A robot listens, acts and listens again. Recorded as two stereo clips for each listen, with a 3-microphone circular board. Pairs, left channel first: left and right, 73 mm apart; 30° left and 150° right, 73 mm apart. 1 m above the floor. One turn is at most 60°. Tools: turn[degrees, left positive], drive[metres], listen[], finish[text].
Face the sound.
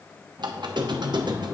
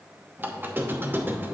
Thought: The squeak: 85° right.
Action: turn[-60]
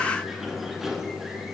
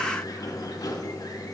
Action: finish[Found it: a squeak, straight ahead, under 1 m away.]